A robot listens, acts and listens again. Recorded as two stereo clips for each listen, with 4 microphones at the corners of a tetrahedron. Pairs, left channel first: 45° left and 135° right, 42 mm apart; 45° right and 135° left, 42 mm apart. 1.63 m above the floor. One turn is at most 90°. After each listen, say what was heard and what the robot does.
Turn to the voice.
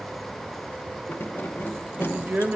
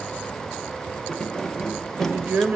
The woman speaking: 170° left. Turn 90° left.
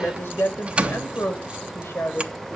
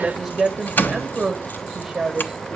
The woman speaking is now 55° left. Turn 55° left.
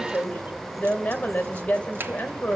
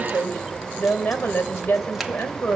The woman speaking is now 10° right. Turn 10° right.
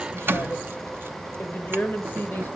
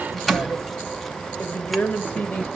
Found it: a woman speaking, straight ahead.